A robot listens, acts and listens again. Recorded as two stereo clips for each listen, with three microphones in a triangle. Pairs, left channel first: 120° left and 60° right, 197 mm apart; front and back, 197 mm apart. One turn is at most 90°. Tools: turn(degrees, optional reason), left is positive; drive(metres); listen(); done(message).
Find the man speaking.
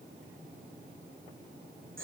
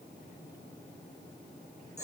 listen()
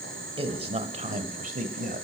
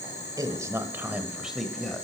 turn(degrees=-85, reason="The man speaking: 85° right.")
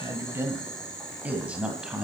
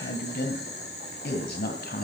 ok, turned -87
turn(degrees=25, reason="The man speaking is now 25° left.")
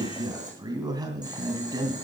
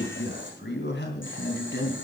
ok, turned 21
turn(degrees=10, reason="The man speaking is now 10° left.")
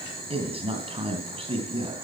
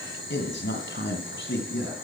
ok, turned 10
done("Facing the man speaking, 2 to 4 m away.")